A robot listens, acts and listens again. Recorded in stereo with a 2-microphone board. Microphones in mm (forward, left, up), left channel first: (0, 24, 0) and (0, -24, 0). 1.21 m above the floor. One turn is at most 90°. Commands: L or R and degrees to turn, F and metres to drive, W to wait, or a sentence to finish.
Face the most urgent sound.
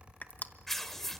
W
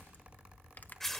W
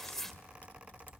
I can't make out anything urgent to turn to.